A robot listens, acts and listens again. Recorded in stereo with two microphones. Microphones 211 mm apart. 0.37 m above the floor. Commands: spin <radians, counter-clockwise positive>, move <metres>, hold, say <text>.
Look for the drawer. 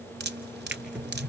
spin -0.52
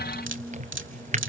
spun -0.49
spin -2.53
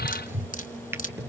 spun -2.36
spin -0.17
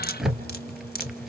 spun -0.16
say Facing the drawer.